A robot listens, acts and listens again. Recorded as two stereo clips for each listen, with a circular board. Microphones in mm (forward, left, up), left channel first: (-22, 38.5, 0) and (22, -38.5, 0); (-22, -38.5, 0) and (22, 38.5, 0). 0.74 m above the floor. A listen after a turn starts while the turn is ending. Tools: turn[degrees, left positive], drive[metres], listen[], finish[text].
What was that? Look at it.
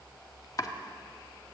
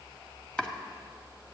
Thought: The chopping: 165° left.
Action: turn[165]
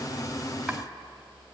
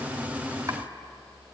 Thought: The chopping is now 25° left.
Action: turn[25]
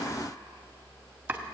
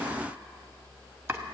Action: finish[Facing the chopping.]